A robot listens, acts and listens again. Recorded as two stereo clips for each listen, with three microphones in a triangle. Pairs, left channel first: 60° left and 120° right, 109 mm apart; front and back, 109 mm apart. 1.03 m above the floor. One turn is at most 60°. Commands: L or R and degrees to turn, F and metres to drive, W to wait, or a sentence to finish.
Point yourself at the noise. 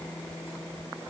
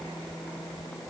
W
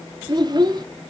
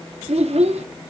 R60
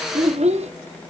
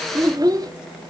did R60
R60
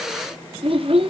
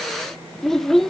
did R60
R60
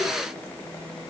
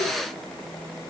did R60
R25
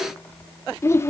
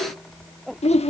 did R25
Found it: a child speaking, straight ahead.